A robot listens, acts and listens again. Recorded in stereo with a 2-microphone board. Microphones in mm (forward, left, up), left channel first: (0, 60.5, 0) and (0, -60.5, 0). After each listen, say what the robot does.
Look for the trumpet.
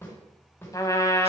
Turn 30° left.
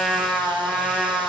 Facing the trumpet, 1 to 2 m away.